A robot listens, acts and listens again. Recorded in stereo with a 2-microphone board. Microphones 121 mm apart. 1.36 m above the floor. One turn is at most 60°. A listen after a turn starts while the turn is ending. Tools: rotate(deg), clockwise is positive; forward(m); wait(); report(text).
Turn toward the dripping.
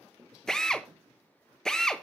wait()
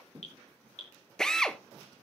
rotate(-60)
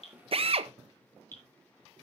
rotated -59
rotate(-15)
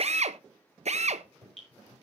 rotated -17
report("Facing the dripping, over 4 m away.")